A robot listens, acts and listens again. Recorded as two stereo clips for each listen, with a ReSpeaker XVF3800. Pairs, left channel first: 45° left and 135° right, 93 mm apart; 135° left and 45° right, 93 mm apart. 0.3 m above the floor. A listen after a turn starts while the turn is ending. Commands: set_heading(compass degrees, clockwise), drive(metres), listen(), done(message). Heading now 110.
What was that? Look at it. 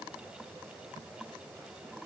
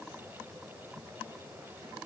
listen()
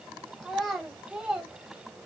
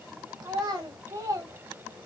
set_heading(170)
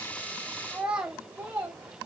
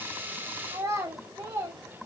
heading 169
set_heading(259)
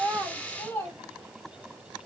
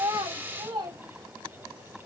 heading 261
set_heading(281)
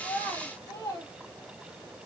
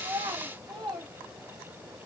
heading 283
done("Found it: a child speaking, straight ahead.")